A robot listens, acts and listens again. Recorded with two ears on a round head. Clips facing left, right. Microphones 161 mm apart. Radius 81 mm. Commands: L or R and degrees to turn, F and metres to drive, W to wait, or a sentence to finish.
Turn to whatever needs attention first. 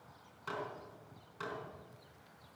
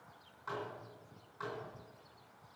W
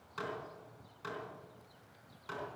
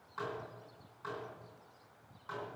W
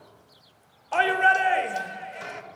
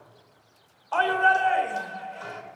L20
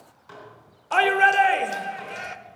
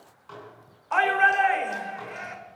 L135
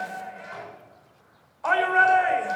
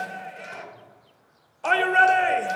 R35
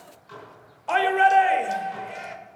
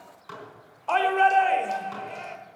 L10
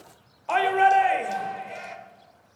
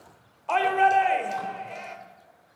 Found it: a shout, straight ahead, 1 to 2 m away.